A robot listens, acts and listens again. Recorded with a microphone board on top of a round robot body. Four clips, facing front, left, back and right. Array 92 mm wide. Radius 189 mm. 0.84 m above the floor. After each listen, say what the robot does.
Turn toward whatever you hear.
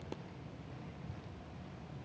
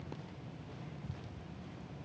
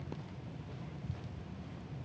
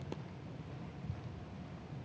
Keep listening.
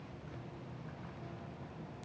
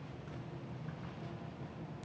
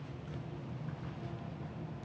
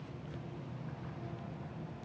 Keep listening.
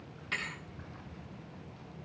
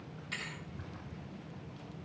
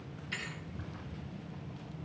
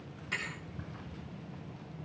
Turn 20° right.
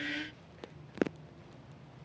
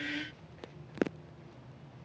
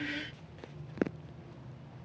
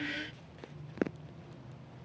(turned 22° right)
I heard a thud from this way, but can't make it out now.